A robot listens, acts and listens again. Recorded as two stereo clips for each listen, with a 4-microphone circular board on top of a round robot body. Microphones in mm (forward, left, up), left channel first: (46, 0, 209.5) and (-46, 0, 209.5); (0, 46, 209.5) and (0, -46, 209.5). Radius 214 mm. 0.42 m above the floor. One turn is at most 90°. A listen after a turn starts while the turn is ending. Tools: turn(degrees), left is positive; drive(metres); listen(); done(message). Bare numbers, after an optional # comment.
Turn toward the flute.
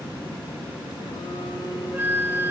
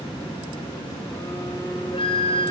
# The flute: 110° left.
turn(90)
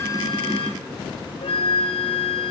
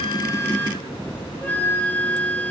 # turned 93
# The flute is now 20° left.
turn(20)
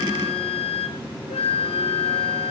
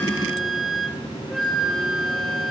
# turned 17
done("Facing the flute, 1 to 2 m away.")